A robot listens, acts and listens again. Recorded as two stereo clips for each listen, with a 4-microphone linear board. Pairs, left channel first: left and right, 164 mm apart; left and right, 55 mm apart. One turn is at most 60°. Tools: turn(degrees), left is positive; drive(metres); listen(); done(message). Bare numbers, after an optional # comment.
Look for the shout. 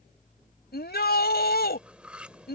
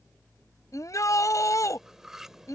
turn(60)
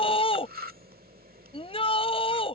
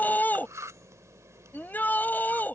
# So it is at 35° left.
turn(35)
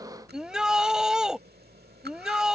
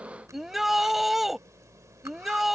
done("Found it: a shout, straight ahead.")